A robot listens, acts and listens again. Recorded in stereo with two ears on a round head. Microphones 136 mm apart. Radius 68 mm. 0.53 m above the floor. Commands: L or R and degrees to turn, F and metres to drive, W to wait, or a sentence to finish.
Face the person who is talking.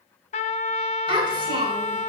R35
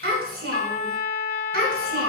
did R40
R105
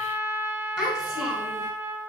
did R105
Found it: a child speaking, straight ahead, over 4 m away.